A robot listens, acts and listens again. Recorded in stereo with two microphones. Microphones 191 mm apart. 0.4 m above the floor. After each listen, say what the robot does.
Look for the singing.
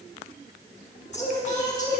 Turn 45° left.
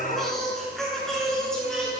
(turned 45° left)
Facing the singing.